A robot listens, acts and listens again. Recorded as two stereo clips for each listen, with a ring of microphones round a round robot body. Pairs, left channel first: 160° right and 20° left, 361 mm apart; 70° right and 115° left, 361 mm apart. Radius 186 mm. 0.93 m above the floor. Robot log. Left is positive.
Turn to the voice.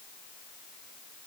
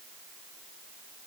cmd idle
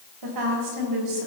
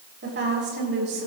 note: The woman speaking: 50° left.
cmd yaw +50
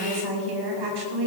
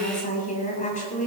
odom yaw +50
end: Found it: a woman speaking, straight ahead, over 4 m away.